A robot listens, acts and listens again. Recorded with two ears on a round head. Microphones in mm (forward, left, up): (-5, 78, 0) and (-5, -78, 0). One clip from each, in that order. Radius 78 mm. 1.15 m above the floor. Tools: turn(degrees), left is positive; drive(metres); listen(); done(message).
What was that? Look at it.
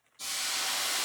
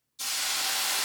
turn(degrees=-50)
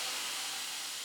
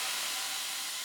turn(degrees=-75)
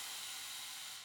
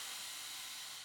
turn(degrees=15)
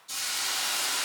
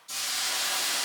done("Facing the hiss, 2 to 4 m away.")